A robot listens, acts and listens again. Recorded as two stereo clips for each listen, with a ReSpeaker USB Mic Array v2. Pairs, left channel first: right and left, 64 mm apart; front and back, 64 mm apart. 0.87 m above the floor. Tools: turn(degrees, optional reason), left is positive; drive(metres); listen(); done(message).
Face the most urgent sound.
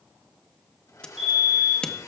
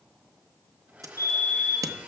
turn(degrees=15, reason="The fire alarm: 15° left.")
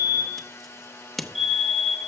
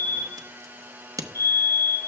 done("Facing the fire alarm, 2 to 4 m away.")